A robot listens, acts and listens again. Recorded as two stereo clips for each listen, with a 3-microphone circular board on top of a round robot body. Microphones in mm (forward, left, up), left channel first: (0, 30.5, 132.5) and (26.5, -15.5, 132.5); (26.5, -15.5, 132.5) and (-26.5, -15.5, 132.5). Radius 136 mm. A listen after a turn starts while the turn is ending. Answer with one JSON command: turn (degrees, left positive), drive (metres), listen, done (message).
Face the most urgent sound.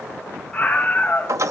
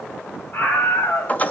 {"turn": 45}
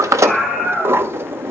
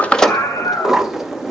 {"done": "Facing the scream, 2 to 4 m away."}